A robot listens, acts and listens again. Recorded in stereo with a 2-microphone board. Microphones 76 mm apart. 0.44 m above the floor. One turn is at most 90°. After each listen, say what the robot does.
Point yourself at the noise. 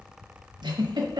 Turn 70° right.
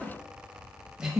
Turn 10° right.
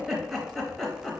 Facing the giggle.